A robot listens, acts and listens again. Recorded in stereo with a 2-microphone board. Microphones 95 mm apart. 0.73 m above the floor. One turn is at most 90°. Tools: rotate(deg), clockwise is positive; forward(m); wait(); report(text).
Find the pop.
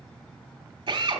wait()
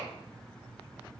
wait()
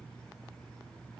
report("I can't make out a pop, only a drill.")